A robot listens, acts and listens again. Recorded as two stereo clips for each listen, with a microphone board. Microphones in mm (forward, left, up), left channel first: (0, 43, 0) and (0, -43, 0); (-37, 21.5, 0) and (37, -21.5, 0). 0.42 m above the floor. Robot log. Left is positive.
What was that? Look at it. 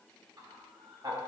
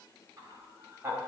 note: The laughter: 85° right.
cmd yaw -85
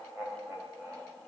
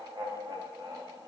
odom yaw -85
note: The laughter is now 40° right.
cmd yaw -40
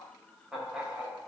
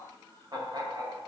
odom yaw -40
note: The laughter is now 15° right.
cmd yaw -15
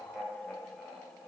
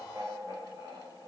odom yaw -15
note: The laughter is now 10° right.
cmd yaw -10
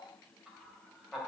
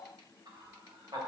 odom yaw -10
end: Found it: laughter, straight ahead, 2 to 4 m away.